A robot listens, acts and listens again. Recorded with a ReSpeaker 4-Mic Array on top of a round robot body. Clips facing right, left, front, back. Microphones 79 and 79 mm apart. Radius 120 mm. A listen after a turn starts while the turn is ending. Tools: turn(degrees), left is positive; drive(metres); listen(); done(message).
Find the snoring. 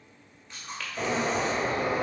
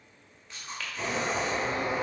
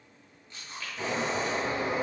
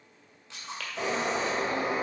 listen()
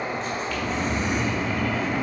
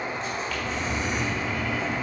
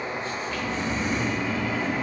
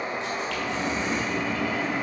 turn(degrees=-60)
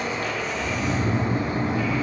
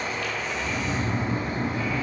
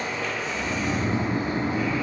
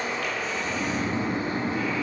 done("Facing the snoring, 2 to 4 m away.")